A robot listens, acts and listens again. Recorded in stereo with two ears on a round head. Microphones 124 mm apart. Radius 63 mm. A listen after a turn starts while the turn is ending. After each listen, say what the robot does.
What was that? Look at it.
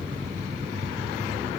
Keep listening.
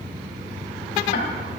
Turn 60° left.
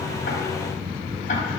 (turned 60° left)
Keep listening.
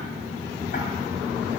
Keep listening.
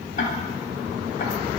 Turn 55° left.
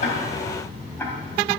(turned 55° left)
Turn 15° left.
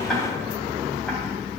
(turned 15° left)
Found it: ticking, straight ahead, 2 to 4 m away.